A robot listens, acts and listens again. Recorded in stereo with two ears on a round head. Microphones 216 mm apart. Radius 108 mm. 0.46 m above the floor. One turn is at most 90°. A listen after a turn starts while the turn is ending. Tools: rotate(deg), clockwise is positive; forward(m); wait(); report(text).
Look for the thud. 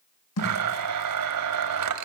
rotate(-70)
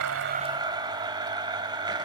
wait()
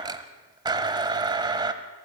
report("I heard a thud, but can't make it out now. It was about straight ahead or 40° left.")